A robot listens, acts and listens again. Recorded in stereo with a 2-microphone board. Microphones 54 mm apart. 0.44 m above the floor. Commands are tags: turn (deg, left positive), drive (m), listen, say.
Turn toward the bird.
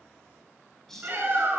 <turn deg="-30"/>
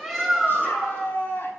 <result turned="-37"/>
<say>Facing the bird, over 4 m away.</say>